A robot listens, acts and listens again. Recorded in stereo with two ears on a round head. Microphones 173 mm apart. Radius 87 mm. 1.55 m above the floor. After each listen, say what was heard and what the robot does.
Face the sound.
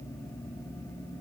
Keep listening.
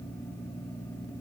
Keep listening.
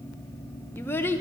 Turn 30° left.
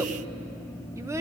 So it is at 20° right. Turn 20° right.
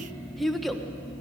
Facing the child speaking.